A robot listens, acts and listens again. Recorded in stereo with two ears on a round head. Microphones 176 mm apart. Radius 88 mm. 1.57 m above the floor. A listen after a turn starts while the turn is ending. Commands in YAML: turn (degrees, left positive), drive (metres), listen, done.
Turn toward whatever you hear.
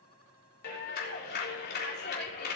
turn: 55
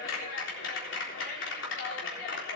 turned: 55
turn: 65
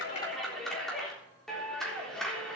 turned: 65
done: "Facing the clap."